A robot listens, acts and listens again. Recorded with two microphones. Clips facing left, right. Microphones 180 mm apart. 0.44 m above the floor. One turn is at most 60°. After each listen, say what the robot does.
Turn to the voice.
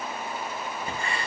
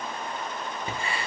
Keep listening.
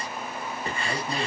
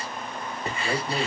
Turn 50° right.
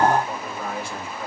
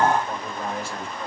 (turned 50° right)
Facing the man speaking.